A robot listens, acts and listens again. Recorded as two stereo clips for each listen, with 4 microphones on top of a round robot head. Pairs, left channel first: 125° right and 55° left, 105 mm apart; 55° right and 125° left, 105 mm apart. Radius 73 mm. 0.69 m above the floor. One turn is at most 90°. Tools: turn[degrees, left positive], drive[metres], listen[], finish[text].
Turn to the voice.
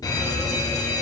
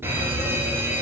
Action: listen[]
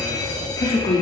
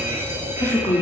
Thought: The woman speaking: 130° right.
Action: turn[-90]
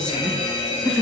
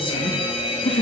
Thought: The woman speaking is now 35° right.
Action: turn[-35]
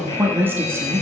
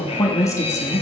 Action: finish[Facing the woman speaking, 1 to 2 m away.]